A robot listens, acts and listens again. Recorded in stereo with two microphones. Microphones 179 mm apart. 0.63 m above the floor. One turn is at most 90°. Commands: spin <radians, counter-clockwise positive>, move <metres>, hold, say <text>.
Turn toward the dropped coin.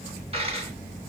spin -0.61
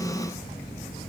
hold
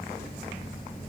say I heard a dropped coin, but can't make it out now. It was about straight ahead or 110° right.